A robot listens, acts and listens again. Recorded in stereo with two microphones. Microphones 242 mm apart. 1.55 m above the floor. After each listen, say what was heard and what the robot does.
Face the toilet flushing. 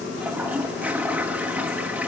Turn 30° right.
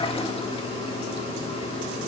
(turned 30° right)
Keep listening.
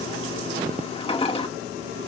So it is at 25° left. Turn 25° left.
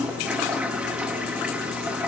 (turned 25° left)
Facing the toilet flushing, 2 to 4 m away.